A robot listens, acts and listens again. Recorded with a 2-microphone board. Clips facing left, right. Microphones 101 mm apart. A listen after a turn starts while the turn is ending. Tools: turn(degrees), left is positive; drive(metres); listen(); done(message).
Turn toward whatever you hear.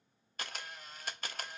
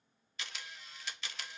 turn(degrees=50)
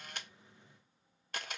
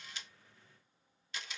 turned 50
turn(degrees=70)
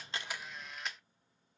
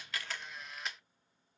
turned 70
done("Found it: a camera shutter, straight ahead, under 1 m away.")